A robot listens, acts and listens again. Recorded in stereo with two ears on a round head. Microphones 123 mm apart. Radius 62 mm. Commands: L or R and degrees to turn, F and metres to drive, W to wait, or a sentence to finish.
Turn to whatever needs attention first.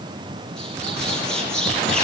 W
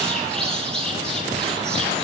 W
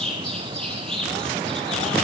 I can't make out anything urgent, only a bird.